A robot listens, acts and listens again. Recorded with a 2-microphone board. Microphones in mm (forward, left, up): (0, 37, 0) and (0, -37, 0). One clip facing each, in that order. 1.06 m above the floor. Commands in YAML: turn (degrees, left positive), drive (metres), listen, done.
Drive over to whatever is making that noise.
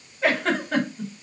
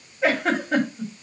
turn: -30
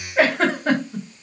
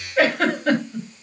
turn: 25
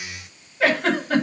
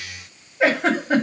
turn: -20
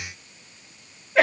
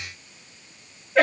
drive: 1.0
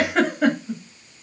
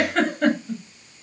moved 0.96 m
turn: 10
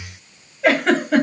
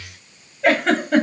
drive: 1.0
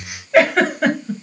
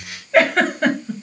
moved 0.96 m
drive: 1.0
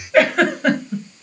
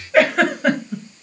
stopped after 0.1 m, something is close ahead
done: "I am next to the giggle."